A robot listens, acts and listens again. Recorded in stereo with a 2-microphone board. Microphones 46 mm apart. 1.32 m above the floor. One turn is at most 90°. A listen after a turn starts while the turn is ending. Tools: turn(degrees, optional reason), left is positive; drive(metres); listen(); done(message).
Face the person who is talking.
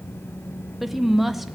turn(degrees=-30)
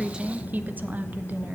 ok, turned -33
turn(degrees=-90, reason="So it is at 145° right.")
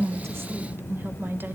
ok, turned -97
turn(degrees=-45, reason="The woman speaking is now 45° right.")
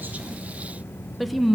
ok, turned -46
done("Found it: a woman speaking, straight ahead, under 1 m away.")